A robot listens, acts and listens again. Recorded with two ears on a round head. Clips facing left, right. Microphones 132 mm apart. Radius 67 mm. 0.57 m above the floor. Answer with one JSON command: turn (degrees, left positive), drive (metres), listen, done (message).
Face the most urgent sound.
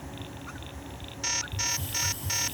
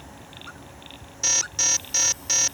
{"turn": -50}
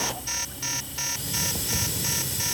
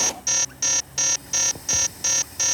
{"turn": -65}
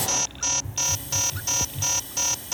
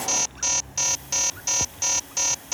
{"done": "Facing the alarm."}